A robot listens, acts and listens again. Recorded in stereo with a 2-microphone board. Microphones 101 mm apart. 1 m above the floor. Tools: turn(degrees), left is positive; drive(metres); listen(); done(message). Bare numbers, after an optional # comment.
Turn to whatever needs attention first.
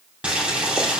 listen()
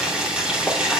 listen()
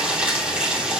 done("I can't make out anything urgent to turn to.")